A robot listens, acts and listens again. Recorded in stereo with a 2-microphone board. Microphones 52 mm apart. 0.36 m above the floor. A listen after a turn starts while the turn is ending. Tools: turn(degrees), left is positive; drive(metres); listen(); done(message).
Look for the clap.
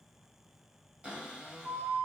listen()
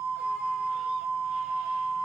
listen()
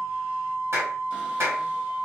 turn(degrees=-60)
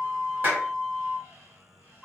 turn(degrees=-45)
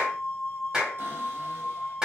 turn(degrees=-15)
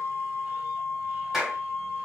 done("Facing the clap.")